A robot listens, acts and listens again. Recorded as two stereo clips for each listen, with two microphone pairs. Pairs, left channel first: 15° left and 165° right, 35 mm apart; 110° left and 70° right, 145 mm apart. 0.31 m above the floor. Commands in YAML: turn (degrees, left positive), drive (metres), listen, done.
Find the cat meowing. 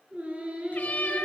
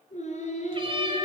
turn: -20
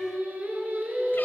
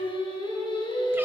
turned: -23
listen: true
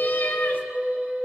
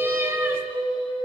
done: "Facing the cat meowing, 2 to 4 m away."